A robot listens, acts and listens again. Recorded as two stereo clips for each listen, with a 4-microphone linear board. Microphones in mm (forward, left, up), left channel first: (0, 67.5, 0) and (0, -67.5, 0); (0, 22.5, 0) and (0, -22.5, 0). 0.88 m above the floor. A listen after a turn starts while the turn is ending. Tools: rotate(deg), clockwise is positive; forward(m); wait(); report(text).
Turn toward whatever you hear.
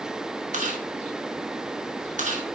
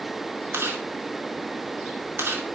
rotate(70)
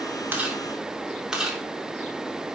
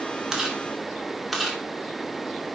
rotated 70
report("Found it: chewing, straight ahead, 2 to 4 m away.")